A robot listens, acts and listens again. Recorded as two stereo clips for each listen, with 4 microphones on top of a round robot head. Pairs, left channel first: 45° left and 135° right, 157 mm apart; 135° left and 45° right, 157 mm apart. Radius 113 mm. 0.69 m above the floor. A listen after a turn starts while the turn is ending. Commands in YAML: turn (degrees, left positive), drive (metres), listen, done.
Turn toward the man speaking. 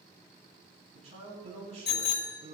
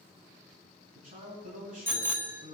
turn: -85
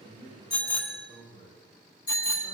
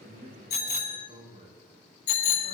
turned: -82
done: "Facing the man speaking."